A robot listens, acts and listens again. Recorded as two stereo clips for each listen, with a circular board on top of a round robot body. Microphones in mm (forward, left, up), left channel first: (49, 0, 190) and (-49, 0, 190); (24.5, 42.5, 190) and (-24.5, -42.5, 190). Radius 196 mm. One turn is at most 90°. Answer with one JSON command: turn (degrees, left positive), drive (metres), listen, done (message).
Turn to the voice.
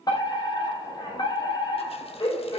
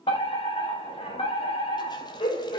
{"listen": true}
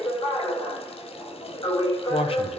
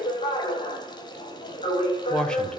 {"turn": -20}
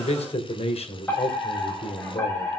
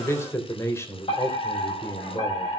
{"done": "Found it: a man speaking, straight ahead."}